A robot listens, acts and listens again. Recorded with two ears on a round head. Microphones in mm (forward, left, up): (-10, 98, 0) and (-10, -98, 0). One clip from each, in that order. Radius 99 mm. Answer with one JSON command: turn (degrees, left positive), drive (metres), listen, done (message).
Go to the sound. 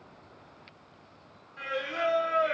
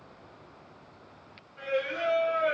{"turn": 50}
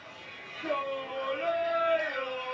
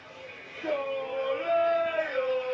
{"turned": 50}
{"drive": 1.0}
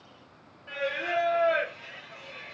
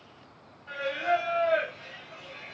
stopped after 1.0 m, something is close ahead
{"done": "I am next to the singing."}